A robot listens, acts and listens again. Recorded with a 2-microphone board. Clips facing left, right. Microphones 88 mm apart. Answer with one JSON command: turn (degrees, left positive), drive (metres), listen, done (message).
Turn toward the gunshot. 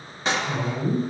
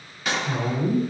{"turn": 30}
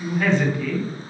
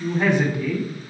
{"listen": true}
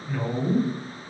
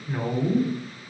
{"done": "I heard a gunshot, but can't make it out now. It was about straight ahead or 120° left."}